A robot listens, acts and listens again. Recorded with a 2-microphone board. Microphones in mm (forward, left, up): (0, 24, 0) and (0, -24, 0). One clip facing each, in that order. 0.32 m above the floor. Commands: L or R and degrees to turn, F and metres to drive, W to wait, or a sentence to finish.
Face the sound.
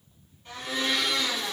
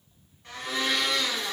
R90
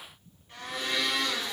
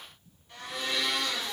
L10
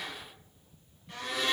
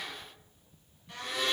Found it: a blender, straight ahead, 1 to 2 m away.